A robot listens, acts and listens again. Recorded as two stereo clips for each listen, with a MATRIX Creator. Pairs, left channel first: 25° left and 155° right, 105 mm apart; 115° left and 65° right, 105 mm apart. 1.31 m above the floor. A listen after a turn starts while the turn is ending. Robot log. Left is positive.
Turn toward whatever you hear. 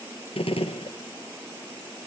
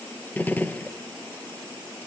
note: The gunshot: 40° left.
cmd yaw +40
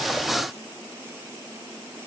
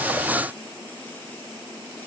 end: Facing where the gunshot came from. I can't hear it now.